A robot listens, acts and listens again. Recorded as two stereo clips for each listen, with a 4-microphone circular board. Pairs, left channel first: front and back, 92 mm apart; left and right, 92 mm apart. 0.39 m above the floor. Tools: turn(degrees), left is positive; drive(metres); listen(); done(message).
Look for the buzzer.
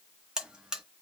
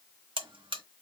turn(degrees=-100)
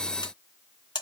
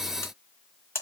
turn(degrees=30)
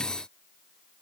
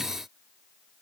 done("Facing the buzzer, under 1 m away.")